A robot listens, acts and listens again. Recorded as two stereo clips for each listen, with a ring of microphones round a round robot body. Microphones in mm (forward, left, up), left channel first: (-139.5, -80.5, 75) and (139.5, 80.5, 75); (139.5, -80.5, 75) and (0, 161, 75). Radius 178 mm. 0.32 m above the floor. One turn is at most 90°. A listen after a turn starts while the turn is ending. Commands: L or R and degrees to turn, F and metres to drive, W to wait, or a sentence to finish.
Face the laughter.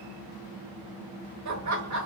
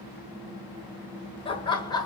L15
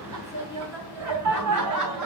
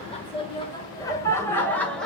L30
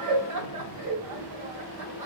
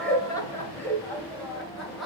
L30
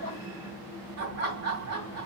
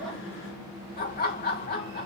Facing the laughter, 2 to 4 m away.